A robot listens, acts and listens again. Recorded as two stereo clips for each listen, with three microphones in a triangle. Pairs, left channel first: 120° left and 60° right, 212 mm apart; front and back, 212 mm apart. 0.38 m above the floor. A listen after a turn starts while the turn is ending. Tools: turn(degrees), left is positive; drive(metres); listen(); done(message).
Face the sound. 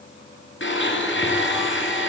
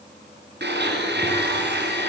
turn(degrees=145)
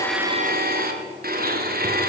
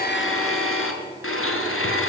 turn(degrees=-15)
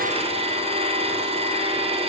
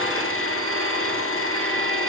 done("Facing the blender.")